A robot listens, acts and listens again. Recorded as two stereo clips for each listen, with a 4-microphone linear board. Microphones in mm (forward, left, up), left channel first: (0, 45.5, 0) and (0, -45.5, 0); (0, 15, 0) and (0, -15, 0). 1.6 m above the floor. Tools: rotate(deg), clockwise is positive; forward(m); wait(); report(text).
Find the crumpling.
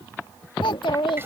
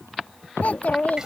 wait()
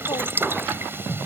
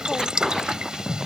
wait()
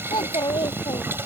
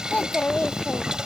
report("I can't make out crumpling to turn to.")